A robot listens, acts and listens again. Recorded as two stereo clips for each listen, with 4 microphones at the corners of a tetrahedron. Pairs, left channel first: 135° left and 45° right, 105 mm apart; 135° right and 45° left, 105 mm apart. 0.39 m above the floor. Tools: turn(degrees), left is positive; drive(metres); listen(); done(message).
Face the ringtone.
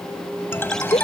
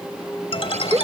turn(degrees=-160)
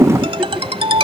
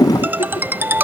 turn(degrees=-25)
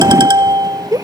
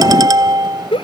done("Found it: a ringtone, straight ahead.")